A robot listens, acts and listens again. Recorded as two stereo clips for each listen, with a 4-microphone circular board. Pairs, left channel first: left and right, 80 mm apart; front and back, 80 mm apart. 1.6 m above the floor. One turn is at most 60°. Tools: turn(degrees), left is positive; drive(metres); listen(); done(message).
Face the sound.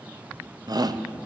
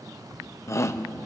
turn(degrees=-55)
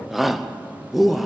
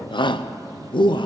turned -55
done("Facing the shout.")